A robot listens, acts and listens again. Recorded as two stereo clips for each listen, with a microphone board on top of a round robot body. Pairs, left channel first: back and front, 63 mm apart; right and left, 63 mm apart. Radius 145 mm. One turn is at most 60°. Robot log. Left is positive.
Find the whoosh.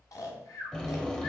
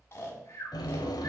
cmd idle
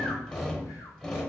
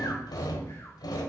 cmd idle
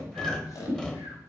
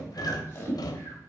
note: The whoosh: 80° left.
cmd yaw +60
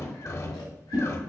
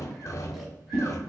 note: The whoosh is now 40° left.
cmd yaw +40
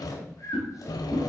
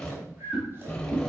cmd idle
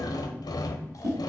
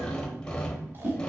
end: Facing the whoosh.